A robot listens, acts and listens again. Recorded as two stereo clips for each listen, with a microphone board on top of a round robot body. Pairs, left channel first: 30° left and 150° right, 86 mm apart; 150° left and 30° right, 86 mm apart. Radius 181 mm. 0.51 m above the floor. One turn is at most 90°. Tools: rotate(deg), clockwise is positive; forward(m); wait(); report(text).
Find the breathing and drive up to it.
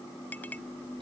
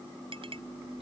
wait()
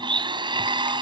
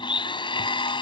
wait()
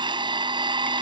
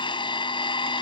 report("I can't make out breathing to turn to.")